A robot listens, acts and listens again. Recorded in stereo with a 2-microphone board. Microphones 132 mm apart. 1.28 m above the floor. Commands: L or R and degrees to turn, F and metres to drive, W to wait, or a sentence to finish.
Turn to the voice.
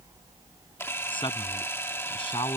L40
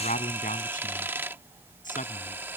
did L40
L100
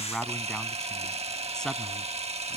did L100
Facing the man speaking.